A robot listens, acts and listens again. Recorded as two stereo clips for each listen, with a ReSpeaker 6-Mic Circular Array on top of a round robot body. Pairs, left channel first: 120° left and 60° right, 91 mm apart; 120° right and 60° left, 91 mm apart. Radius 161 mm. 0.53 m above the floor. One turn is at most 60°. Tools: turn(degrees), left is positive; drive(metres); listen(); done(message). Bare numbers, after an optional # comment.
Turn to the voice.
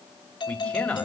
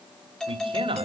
# The man speaking: 40° left.
turn(40)
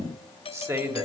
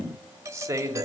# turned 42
done("Found it: a man speaking, straight ahead.")